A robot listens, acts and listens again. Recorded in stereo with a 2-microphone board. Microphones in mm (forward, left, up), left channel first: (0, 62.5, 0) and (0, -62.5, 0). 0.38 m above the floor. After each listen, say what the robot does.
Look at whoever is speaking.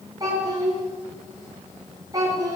Turn 30° right.
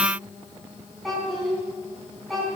Found it: a child speaking, straight ahead, 2 to 4 m away.